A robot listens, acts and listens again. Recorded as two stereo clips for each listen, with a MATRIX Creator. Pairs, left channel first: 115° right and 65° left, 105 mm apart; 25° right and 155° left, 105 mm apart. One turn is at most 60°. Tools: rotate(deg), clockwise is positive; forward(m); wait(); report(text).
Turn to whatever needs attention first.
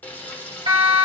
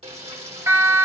rotate(-60)
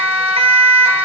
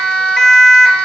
rotate(-60)
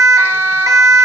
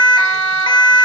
rotate(-20)
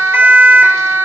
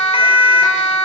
report("Found it: a siren, straight ahead.")